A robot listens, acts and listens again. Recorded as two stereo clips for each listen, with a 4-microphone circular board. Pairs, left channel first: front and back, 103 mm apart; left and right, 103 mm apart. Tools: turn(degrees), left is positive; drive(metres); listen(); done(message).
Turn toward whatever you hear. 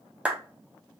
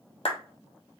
turn(degrees=105)
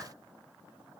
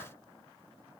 listen()
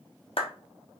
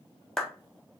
done("Facing the clap.")